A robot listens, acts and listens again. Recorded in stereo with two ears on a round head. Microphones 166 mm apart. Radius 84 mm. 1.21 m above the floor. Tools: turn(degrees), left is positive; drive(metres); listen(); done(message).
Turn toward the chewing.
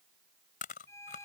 turn(degrees=45)
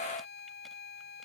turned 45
listen()
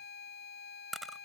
done("Found it: chewing, straight ahead.")